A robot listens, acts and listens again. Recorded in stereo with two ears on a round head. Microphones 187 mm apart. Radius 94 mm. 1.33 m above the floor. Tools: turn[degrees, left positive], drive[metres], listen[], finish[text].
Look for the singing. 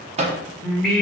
Action: turn[30]
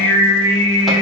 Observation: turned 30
Thought: So it is at 160° left.
Action: turn[160]
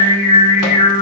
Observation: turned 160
Thought: The singing is now 65° left.
Action: turn[65]
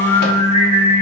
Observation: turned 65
Thought: The singing is now 40° left.
Action: turn[40]
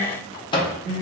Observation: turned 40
Thought: The singing is now 20° left.
Action: turn[20]
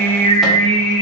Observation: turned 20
Action: finish[Facing the singing.]